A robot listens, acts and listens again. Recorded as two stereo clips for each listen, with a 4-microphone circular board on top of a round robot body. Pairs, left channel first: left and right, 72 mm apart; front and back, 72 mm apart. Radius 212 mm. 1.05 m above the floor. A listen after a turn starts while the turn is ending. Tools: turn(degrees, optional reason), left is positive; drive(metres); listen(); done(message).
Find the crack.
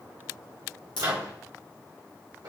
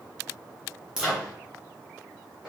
turn(degrees=100, reason="The crack: 100° left.")
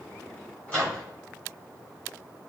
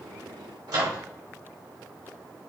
done("Facing where the crack came from. I can't hear it now.")